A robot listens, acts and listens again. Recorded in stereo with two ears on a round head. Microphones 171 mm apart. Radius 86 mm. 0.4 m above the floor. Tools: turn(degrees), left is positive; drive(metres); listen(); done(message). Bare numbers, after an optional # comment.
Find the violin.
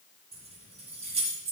listen()
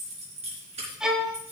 turn(-30)
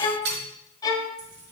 # So it is at 25° left.
turn(25)
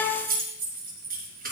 # The violin is now 15° left.
turn(15)
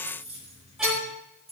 listen()
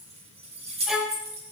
done("Found it: a violin, straight ahead.")